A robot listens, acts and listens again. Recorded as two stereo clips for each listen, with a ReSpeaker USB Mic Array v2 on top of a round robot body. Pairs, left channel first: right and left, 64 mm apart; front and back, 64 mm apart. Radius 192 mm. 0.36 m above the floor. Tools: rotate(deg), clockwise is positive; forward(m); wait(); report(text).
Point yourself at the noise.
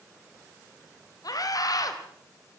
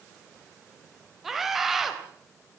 rotate(95)
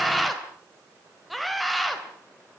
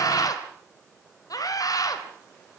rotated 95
report("Facing the scream.")